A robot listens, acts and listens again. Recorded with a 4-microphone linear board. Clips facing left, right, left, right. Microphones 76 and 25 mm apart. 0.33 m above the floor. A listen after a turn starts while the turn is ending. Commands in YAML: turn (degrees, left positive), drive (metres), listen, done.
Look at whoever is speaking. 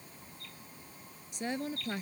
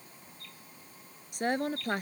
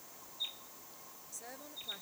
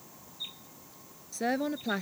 turn: -55
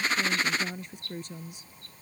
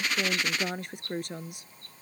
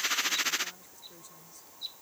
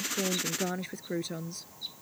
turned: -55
turn: -70
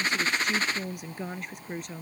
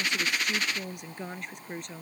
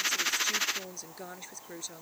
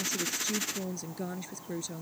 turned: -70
done: "Facing the woman speaking."